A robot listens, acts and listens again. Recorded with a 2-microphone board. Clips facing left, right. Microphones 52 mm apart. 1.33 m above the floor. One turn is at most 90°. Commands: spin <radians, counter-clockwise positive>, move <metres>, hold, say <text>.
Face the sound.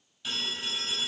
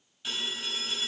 spin -0.52
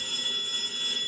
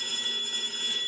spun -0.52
spin -1.57
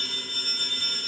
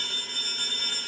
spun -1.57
spin -1.40
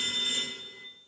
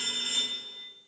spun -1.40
spin -0.44
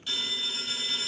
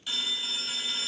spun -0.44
say Facing the phone ringing.